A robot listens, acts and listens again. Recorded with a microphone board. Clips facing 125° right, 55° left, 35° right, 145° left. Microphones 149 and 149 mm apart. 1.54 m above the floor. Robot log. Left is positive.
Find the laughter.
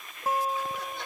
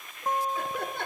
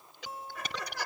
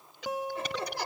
note: The laughter: 85° left.
cmd yaw +85
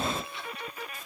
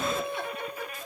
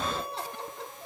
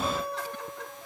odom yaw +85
cmd idle
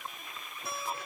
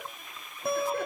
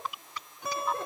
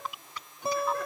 cmd idle
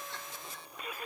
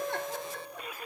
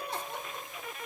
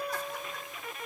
note: The laughter is now 30° left.
cmd yaw +30
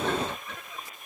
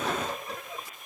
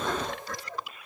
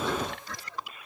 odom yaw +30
end: Facing the laughter.